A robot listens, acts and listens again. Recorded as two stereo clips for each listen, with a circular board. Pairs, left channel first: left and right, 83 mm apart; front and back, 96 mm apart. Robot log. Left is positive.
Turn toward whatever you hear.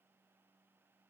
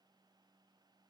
cmd idle
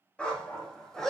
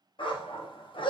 end: Found it: a dog barking, straight ahead.